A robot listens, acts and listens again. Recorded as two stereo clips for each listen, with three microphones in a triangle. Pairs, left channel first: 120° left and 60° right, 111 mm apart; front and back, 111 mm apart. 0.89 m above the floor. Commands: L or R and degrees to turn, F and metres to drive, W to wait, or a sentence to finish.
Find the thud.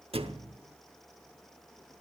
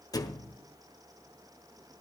R50
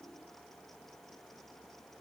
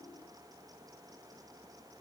Facing where the thud came from. I can't hear it now.